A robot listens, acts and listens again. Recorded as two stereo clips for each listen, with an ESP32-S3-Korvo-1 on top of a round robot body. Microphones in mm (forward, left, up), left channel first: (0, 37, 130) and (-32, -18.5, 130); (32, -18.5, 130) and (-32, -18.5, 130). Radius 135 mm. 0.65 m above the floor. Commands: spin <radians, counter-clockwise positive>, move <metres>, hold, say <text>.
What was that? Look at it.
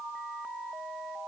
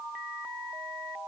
hold
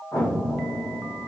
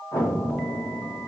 spin 0.44
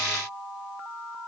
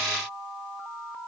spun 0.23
spin 0.26
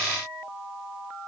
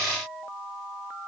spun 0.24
say Facing where the explosion came from. I can't hear it now.